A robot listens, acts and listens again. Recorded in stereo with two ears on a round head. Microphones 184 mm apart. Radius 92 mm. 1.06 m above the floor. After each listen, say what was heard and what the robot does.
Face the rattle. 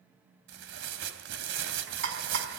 The rattle: about 65° right or 115° right. Turn 65° right.
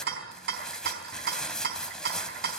So it is at 50° right. Turn 50° right.
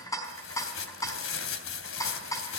The rattle is now 15° left. Turn 15° left.
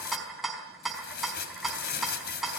Facing the rattle, over 4 m away.